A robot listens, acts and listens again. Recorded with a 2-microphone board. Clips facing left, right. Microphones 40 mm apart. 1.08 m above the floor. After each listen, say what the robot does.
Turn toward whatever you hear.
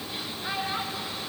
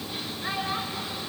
Turn 25° right.
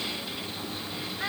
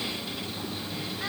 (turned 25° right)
Turn 10° left.
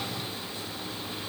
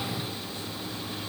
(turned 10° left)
Keep listening.
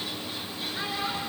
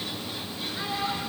Found it: a child speaking, straight ahead.